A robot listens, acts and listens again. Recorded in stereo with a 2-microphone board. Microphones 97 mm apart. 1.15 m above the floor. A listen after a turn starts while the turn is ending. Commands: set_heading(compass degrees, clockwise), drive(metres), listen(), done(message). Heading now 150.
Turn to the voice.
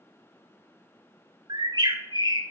listen()
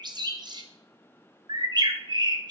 listen()
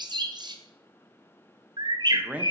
set_heading(180)
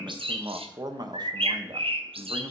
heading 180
set_heading(315)
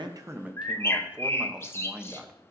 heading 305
set_heading(315)
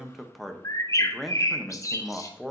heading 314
done("Facing the man speaking, under 1 m away.")